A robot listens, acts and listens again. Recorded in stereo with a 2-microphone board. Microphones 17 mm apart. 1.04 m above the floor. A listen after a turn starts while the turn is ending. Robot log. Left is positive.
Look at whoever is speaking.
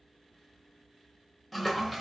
cmd idle
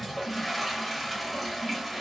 cmd idle
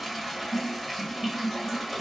end: I can't make out anyone speaking to turn to.